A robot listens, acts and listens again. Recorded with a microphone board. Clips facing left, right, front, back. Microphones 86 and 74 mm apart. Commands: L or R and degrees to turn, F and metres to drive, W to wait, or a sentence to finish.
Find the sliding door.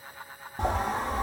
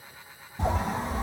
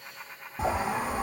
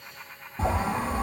L80
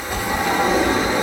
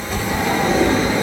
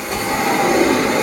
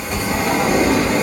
L20
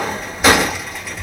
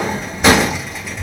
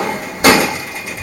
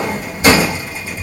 Facing the sliding door.